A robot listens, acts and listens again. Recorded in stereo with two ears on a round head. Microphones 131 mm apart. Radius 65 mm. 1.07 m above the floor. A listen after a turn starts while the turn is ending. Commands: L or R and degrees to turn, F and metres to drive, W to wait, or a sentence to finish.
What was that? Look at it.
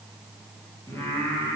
L20
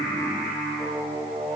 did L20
L30
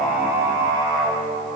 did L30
R25
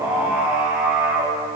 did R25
Found it: singing, straight ahead, over 4 m away.